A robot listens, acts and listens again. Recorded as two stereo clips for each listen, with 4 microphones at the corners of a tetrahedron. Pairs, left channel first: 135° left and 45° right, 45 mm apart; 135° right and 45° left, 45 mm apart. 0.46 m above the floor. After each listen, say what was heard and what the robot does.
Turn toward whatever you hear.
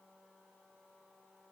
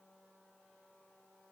Keep listening.
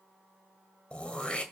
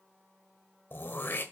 The throat clearing: 160° right. Turn 160° right.
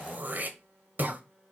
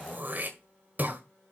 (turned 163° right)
Found it: throat clearing, straight ahead.